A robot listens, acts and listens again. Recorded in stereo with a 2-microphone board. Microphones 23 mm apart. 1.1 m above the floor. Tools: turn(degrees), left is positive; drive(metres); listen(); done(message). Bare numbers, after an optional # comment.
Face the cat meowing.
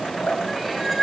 turn(30)
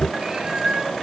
# So it is at 30° right.
turn(-30)
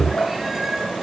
listen()
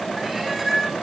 # The cat meowing is now 10° right.
turn(-10)
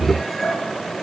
listen()
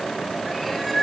done("Facing the cat meowing.")